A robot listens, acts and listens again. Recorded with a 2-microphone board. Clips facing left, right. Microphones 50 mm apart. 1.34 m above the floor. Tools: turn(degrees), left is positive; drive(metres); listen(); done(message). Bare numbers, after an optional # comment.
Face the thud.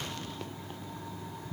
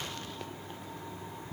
listen()
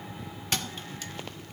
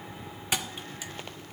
turn(-30)
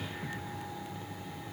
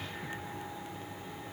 listen()
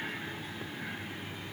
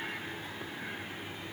done("I heard a thud, but can't make it out now. It was about 20° left or 140° right.")